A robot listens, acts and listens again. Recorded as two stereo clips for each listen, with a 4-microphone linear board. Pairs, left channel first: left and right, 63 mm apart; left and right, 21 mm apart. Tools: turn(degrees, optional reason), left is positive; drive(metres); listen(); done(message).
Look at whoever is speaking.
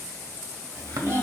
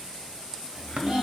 turn(degrees=-40, reason="The child speaking: about 40° right or 140° right.")
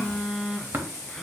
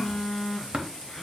listen()
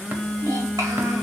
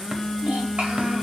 turn(degrees=-100, reason="So it is at 100° right.")
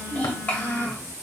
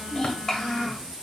turn(degrees=25, reason="The child speaking is now 25° left.")
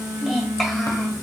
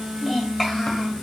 done("Facing the child speaking.")